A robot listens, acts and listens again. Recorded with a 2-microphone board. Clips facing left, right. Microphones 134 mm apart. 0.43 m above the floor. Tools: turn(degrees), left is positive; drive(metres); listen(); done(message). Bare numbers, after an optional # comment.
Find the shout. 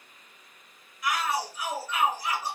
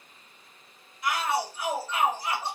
# The shout: about 30° right or 150° right.
turn(-30)
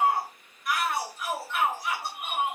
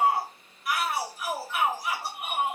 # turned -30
done("Found it: a shout, straight ahead.")